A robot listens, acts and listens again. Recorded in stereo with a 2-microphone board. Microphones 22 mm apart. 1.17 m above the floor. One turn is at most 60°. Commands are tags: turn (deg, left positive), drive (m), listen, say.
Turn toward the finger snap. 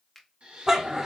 <turn deg="30"/>
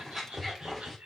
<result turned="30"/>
<listen/>
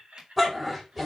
<listen/>
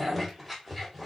<say>I heard a finger snap, but can't make it out now. It was about 25° right or 145° left.</say>